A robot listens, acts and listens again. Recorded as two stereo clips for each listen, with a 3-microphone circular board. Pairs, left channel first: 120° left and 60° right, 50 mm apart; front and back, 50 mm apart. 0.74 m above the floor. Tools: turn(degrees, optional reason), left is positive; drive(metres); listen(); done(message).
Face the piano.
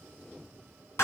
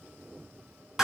listen()
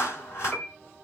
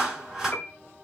turn(degrees=50, reason="The piano: 50° left.")
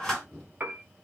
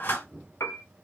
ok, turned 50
turn(degrees=-10, reason="The piano is now 10° right.")
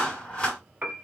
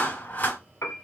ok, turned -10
done("Found it: a piano, straight ahead.")